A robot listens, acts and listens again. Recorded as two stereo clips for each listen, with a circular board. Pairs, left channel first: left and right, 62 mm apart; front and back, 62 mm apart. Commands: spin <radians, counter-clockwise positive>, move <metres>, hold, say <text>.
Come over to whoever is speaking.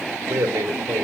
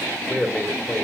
spin -0.96
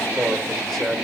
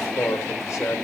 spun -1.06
move 1.0
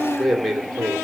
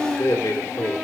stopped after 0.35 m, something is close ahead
say Blocked. The man speaking is further on, straight ahead.